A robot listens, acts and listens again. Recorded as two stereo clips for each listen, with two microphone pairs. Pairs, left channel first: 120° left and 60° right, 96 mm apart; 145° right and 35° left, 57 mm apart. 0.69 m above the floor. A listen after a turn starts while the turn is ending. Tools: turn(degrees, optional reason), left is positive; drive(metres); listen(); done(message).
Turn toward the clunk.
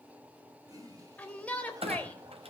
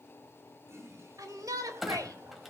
turn(degrees=-55, reason="The clunk: 55° right.")
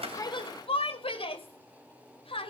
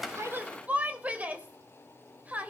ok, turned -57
done("I heard a clunk from this way, but can't make it out now.")